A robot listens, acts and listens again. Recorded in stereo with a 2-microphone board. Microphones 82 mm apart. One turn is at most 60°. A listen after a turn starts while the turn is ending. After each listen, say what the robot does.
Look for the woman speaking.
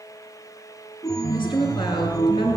Turn 60° left.
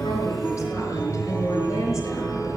Turn 30° left.
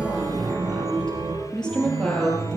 Turn 10° left.
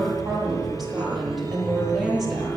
Facing the woman speaking, over 4 m away.